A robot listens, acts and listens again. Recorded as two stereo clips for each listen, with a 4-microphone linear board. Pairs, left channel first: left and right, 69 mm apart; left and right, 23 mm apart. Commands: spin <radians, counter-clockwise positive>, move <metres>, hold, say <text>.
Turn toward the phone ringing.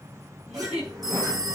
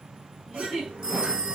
spin -1.05
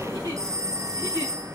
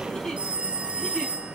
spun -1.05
spin -0.96
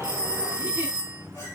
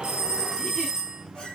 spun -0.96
spin -0.26
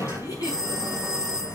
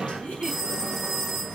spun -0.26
spin -0.17
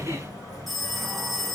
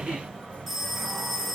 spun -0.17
say Facing the phone ringing, 2 to 4 m away.